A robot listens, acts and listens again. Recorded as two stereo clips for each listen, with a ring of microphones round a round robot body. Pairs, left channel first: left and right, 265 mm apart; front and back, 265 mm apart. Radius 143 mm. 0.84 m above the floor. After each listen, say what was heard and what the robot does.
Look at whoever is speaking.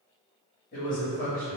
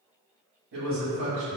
The man speaking: 145° left. Turn 145° left.
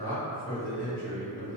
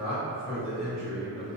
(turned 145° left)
The man speaking is now 20° left. Turn 20° left.
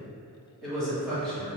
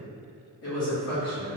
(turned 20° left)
Facing the man speaking, 1 to 2 m away.